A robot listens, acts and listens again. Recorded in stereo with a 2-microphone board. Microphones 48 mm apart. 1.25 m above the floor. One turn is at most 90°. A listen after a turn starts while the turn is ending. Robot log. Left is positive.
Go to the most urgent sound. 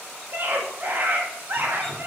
note: The scream: about 45° right or 135° right.
cmd yaw -45
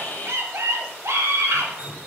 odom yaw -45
note: So it is at 90° right.
cmd yaw -90
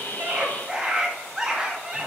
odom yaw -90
note: The scream is now 15° right.
cmd yaw -15
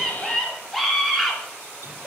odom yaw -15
cmd fwd 1.0
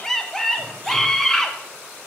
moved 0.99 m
note: The scream is now 10° left.
cmd yaw +10
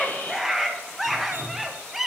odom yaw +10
cmd fwd 1.0
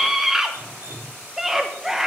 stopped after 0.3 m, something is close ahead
end: I am next to the scream.